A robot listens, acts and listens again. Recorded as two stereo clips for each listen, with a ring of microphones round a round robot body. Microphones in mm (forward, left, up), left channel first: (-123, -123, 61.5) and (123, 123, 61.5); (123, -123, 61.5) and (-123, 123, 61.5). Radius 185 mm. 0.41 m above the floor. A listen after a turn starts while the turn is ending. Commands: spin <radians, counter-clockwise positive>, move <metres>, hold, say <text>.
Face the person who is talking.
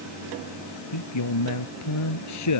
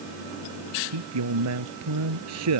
spin 3.14
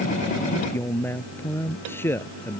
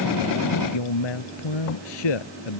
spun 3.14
spin -0.87
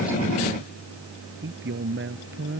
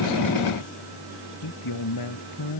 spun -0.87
spin -0.26
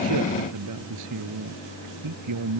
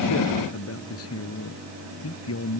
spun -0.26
say Facing the man speaking.